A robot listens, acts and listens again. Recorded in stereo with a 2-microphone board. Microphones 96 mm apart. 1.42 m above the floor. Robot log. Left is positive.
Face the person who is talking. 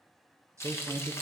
note: The man speaking: about 35° right or 145° right.
cmd yaw -35
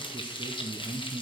note: So it is at 110° right.
cmd yaw -110
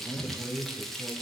end: Found it: a man speaking, straight ahead.